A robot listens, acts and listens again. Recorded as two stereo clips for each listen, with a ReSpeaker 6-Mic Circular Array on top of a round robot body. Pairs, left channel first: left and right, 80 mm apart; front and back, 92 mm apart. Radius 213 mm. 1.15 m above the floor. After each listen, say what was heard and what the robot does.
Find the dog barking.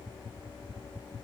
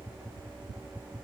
Keep listening.
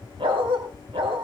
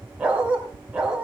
The dog barking: 100° right. Turn 100° right.
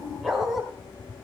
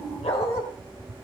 Facing the dog barking, 2 to 4 m away.